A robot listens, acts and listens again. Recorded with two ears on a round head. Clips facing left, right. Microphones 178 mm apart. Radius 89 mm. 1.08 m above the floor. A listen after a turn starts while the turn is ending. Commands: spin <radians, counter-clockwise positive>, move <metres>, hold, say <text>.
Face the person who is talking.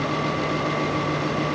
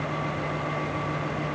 hold
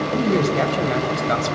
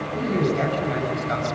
spin 1.13
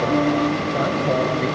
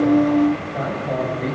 spin 0.87
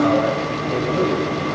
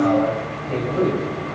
spin 0.35
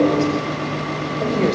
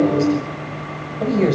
say Found it: a man speaking, straight ahead.